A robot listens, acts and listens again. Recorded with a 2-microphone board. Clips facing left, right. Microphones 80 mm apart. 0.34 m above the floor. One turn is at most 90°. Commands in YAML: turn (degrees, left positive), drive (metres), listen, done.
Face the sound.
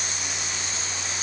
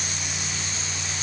listen: true
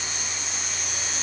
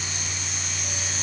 listen: true
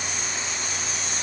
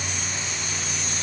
done: "I can't make out anything."